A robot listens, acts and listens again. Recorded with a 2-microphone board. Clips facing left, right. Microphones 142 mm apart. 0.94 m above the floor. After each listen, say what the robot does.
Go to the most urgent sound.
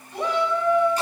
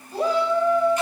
Turn 35° right.
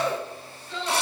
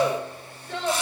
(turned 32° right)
Turn 115° right.
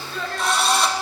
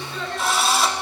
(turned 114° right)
Drive 1.0 m forward.
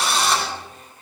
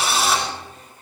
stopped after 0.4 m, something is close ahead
Keep listening.
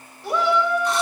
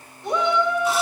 Something is in my way. I am facing the shout but have not reached it.